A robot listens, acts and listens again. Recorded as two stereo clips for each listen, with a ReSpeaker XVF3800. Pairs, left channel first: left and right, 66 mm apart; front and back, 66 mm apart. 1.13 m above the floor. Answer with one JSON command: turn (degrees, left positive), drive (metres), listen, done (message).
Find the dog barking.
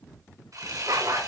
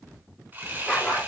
{"turn": -85}
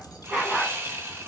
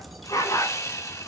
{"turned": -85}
{"turn": -10}
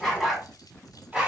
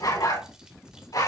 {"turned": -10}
{"done": "Found it: a dog barking, straight ahead, 2 to 4 m away."}